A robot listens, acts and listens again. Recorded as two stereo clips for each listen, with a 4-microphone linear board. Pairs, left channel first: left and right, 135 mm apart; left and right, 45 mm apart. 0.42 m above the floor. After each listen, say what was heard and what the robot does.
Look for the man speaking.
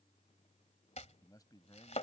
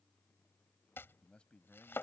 The man speaking: about 30° left or 150° left. Turn 30° left.
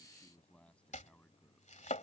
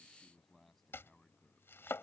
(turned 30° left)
So it is at 10° left. Turn 10° left.
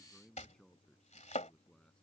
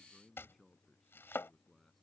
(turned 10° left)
Found it: a man speaking, straight ahead.